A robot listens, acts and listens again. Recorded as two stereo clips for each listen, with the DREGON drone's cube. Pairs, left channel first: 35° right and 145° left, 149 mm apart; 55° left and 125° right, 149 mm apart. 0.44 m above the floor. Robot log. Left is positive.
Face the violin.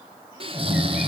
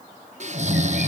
cmd idle
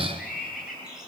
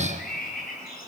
cmd idle
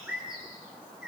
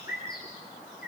end: I can't make out a violin, only snoring and a bird.